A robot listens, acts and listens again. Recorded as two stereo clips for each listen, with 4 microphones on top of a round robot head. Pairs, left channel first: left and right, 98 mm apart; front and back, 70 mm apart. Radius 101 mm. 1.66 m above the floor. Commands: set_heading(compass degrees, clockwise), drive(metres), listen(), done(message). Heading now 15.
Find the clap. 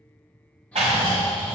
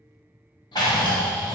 set_heading(65)
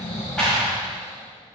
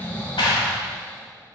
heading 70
done("Facing the clap, under 1 m away.")